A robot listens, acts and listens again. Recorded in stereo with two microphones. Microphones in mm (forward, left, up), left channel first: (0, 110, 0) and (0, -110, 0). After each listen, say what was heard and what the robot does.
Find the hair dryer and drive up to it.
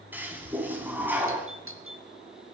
Keep listening.
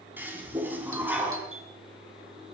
Keep listening.
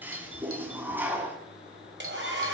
The hair dryer: about 55° right or 125° right. Turn 55° right.
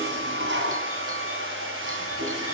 So it is at 70° right. Turn 70° right.
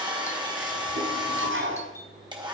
The hair dryer is now 20° right. Turn 20° right.
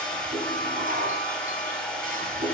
Drive 1.0 m forward.
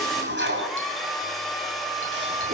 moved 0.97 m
Drive 1.0 m forward.
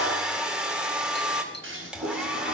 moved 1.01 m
Drive 1.0 m forward.
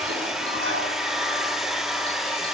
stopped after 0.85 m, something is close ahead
Arrived at the hair dryer, straight ahead.